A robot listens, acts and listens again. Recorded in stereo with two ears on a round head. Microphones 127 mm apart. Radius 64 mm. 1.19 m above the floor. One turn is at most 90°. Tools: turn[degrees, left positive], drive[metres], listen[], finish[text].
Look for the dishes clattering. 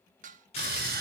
Thought: The dishes clattering: about 60° right or 120° right.
Action: turn[-60]
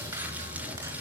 Action: listen[]
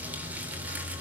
Action: listen[]
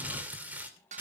Thought: So it is at 60° right.
Action: turn[-60]
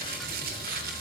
Action: listen[]
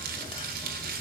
Action: listen[]
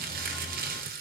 Action: finish[Facing where the dishes clattering came from. I can't hear it now.]